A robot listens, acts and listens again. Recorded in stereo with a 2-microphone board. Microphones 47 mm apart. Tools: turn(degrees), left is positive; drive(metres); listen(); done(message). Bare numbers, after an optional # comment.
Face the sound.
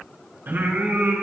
# The singing: about 55° right or 125° right.
turn(-55)
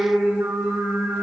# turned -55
# So it is at 65° right.
turn(-65)
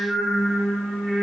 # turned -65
done("Found it: singing, straight ahead, over 4 m away.")